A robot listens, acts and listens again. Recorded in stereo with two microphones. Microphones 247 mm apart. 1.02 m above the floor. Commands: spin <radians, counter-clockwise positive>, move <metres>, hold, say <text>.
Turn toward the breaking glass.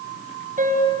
hold
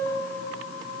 hold
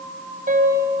say I can't make out breaking glass to turn to.